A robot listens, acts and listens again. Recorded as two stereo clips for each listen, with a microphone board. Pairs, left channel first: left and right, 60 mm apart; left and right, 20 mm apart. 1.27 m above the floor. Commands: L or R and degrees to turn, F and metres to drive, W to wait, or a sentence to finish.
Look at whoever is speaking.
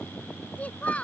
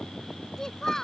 L25
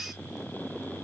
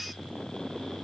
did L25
W
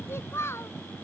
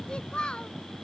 L135
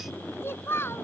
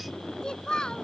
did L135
L40
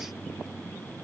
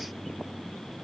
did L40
W
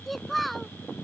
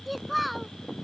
Facing the child speaking.